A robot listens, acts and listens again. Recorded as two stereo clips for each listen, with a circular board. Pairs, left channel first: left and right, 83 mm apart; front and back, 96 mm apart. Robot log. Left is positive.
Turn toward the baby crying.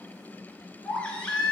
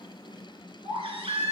note: The baby crying: 170° left.
cmd yaw +170
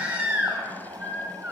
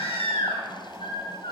note: The baby crying is now 15° right.
cmd yaw -15
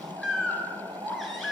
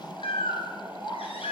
end: Found it: a baby crying, straight ahead, 2 to 4 m away.